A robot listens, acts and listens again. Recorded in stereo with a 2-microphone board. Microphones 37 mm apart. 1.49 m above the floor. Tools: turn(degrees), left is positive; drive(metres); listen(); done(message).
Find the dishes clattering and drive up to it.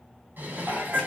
turn(degrees=-60)
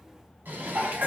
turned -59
turn(degrees=-60)
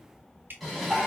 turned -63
drive(metres=1.0)
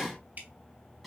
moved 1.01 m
drive(metres=1.0)
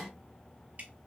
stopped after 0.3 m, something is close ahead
done("I am next to the dishes clattering.")